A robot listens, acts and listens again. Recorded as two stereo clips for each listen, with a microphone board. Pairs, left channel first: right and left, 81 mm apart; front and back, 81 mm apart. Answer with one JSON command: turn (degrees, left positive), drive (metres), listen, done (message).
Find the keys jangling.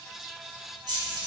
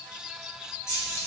{"turn": 55}
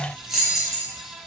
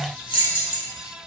{"done": "Found it: keys jangling, straight ahead, 1 to 2 m away."}